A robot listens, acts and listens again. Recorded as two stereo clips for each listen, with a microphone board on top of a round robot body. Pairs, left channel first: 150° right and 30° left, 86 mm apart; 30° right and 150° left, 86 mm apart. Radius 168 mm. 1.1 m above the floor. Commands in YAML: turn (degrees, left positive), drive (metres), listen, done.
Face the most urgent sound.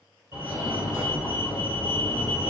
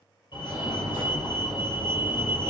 turn: -35
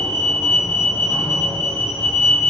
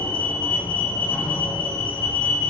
done: "Facing the fire alarm, 2 to 4 m away."